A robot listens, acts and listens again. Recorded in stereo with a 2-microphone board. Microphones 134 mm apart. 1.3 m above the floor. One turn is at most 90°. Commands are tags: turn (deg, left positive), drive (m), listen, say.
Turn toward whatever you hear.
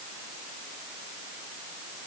<listen/>
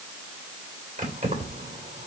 <turn deg="-90"/>
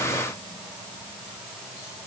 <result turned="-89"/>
<listen/>
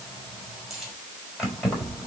<say>Found it: keys jangling, straight ahead, over 4 m away.</say>